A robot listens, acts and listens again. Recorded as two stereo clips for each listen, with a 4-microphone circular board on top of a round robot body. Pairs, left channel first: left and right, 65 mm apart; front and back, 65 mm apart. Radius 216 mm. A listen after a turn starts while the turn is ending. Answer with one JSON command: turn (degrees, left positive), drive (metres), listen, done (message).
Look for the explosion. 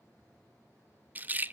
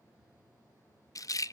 {"listen": true}
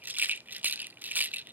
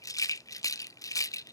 {"listen": true}
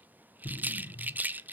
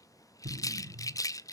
{"turn": 140}
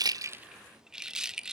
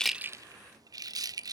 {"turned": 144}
{"done": "I heard an explosion from this way, but can't make it out now."}